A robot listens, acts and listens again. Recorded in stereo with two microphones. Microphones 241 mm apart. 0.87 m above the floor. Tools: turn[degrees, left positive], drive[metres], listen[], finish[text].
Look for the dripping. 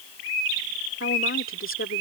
Action: listen[]
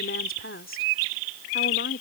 Action: listen[]
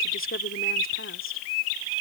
Action: finish[I can't make out dripping, only a woman speaking.]